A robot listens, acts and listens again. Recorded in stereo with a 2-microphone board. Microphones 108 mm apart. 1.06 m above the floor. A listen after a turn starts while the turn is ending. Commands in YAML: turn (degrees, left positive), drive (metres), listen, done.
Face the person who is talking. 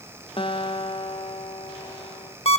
listen: true
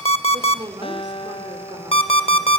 turn: -40
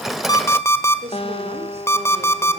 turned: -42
turn: -100
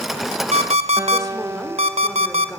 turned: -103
listen: true
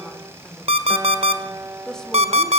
done: "Found it: a woman speaking, straight ahead, 2 to 4 m away."